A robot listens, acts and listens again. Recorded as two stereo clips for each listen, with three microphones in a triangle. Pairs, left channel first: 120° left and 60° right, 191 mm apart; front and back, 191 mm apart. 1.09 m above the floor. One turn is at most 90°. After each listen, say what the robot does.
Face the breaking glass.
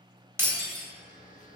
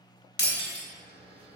Turn 15° left.
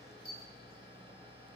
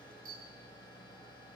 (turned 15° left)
Facing where the breaking glass came from. I can't hear it now.